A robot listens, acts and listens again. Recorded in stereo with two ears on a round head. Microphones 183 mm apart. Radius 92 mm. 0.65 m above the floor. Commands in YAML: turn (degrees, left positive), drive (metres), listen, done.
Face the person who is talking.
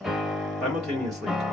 turn: 30
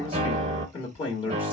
turn: 150
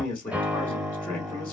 turn: 10
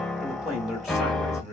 done: "Facing the man speaking, 1 to 2 m away."